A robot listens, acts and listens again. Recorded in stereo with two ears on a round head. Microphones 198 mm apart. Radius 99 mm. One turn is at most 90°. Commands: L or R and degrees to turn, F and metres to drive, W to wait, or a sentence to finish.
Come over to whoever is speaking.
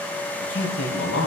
L65
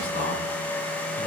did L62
L45
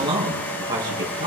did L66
R20
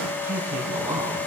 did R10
R10
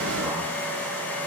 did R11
W
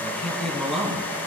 F1.0
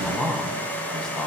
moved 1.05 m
F1.0
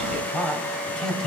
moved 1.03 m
F1.0
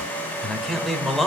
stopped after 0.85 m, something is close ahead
I am next to the man speaking.